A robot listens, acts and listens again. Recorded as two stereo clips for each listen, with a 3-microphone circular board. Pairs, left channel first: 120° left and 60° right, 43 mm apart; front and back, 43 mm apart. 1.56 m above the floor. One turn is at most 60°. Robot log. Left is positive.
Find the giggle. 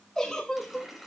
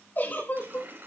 note: The giggle: 40° left.
cmd yaw +40
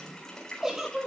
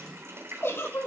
note: The giggle is now 15° left.
cmd yaw +15
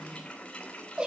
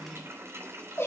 end: Facing the giggle.